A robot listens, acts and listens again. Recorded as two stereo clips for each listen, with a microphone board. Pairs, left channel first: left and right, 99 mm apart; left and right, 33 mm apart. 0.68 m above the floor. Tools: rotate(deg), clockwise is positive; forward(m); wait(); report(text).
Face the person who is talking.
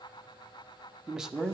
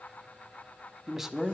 rotate(30)
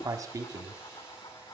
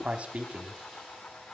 rotate(145)
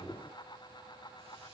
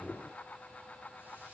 wait()
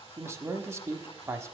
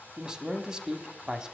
rotate(30)
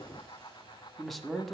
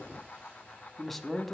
report("Facing the man speaking, 1 to 2 m away.")